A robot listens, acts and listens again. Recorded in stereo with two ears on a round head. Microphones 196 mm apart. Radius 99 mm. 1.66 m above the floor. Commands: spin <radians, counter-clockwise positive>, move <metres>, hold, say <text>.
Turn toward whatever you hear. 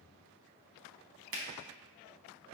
spin -0.96
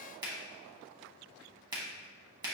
spin -0.44
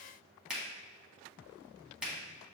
say Facing the finger snap, under 1 m away.